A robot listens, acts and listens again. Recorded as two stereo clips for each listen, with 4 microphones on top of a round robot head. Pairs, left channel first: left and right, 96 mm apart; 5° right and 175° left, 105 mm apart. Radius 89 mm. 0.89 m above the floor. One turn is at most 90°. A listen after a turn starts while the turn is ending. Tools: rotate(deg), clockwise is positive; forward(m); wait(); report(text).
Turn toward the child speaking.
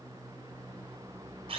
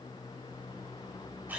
wait()
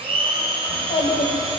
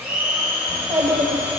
rotate(-90)
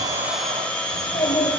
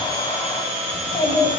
rotate(-40)
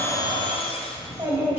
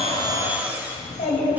rotate(25)
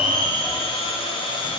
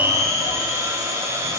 wait()
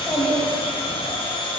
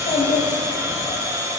rotate(10)
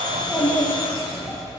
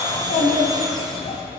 report("Found it: a child speaking, straight ahead, 2 to 4 m away.")